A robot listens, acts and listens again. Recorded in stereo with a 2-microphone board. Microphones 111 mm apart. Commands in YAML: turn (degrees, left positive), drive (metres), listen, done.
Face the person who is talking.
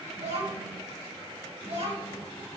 turn: -65
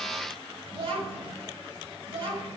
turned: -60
turn: -55
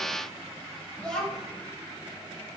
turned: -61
done: "Found it: a child speaking, straight ahead."